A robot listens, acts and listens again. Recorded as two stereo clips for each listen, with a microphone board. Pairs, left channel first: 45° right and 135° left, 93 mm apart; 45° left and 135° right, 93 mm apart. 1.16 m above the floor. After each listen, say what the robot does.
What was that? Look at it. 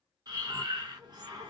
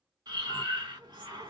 Turn 180° left.
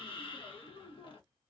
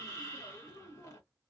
Turn 15° right.
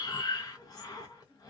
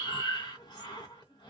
Facing the breathing, under 1 m away.